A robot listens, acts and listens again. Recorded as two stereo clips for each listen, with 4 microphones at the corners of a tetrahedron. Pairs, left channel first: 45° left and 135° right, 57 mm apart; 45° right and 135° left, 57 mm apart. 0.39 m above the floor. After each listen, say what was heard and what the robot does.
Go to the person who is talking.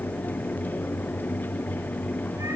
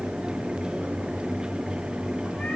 Keep listening.
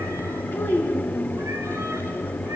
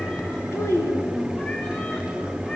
Drive 1.0 m forward.
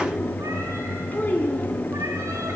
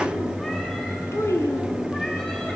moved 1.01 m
The child speaking is now 10° right. Turn 10° right.
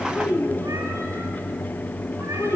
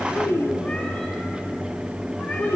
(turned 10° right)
Drive 1.0 m forward.
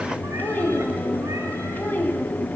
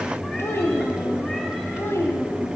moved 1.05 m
The child speaking is now 10° right. Turn 10° right.
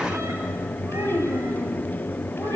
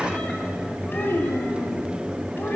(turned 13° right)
Drive 1.0 m forward.
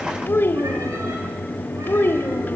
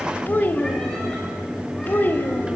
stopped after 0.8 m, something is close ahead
I am next to the child speaking.